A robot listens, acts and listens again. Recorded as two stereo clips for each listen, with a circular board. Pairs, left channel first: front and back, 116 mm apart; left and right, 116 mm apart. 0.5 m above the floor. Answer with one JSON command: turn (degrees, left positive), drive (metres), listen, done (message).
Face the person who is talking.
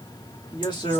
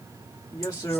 {"turn": 40}
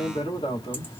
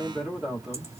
{"done": "Found it: a man speaking, straight ahead."}